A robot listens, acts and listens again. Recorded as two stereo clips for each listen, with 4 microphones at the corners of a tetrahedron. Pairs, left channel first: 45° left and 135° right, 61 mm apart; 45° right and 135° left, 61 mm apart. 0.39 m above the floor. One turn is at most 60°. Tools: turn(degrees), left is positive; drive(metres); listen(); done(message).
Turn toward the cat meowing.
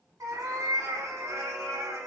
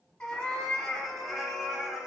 turn(degrees=-60)
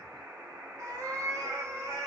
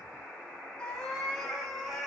turn(degrees=-60)
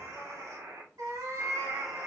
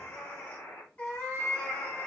turn(degrees=-60)
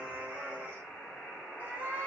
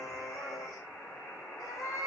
turn(degrees=-60)
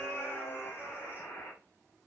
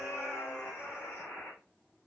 done("Found it: a cat meowing, straight ahead.")